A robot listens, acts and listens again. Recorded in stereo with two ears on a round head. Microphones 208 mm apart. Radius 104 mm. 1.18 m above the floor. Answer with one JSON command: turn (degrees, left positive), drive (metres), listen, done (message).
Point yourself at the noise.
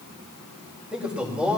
{"turn": -30}
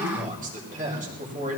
{"turn": -145}
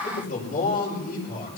{"turn": 40}
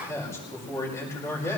{"turn": 10}
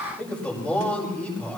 {"done": "Facing the man speaking, over 4 m away."}